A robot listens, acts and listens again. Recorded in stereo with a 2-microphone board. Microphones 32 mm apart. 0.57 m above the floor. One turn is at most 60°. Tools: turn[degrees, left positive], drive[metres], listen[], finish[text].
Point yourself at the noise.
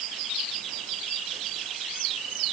Action: listen[]
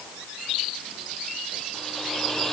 Action: turn[30]
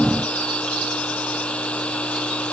Thought: So it is at 145° left.
Action: turn[60]
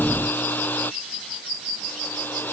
Thought: The hair dryer is now 95° left.
Action: turn[60]
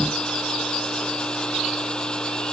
Thought: The hair dryer is now 30° left.
Action: turn[30]
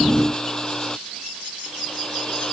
Thought: The hair dryer is now 20° left.
Action: turn[20]
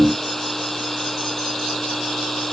Thought: The hair dryer is now 10° left.
Action: turn[10]
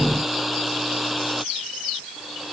Action: finish[Found it: a hair dryer, straight ahead.]